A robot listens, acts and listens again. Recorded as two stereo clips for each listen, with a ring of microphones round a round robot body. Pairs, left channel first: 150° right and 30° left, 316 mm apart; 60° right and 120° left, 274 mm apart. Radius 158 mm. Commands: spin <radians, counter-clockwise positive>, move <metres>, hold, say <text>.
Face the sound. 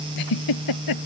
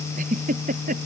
spin -3.05
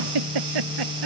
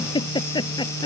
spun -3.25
spin 0.26
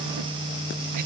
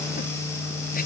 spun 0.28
hold
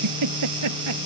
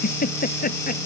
say Facing the giggle.